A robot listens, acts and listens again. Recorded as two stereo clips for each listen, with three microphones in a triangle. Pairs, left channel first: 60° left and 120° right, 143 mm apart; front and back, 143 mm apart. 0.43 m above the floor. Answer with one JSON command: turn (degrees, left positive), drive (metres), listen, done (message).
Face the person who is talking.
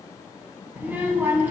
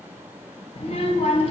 {"turn": -40}
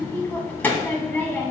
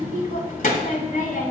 {"turn": -15}
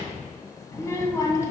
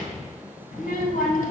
{"turn": -10}
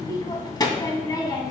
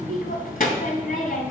{"done": "Found it: a child speaking, straight ahead."}